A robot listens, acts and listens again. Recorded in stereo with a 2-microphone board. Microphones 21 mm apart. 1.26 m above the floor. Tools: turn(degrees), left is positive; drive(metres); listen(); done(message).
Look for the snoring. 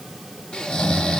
turn(degrees=40)
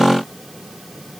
listen()
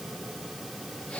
listen()
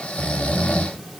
turn(degrees=100)
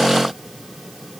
listen()
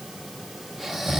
turn(degrees=-15)
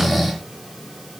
done("Found it: snoring, straight ahead, under 1 m away.")